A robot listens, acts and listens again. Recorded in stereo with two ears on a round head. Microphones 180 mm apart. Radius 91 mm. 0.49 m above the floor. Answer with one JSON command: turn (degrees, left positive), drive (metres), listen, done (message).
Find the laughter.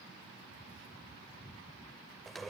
{"listen": true}
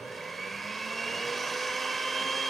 {"listen": true}
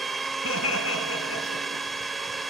{"turn": 75}
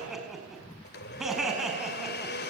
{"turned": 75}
{"done": "Facing the laughter."}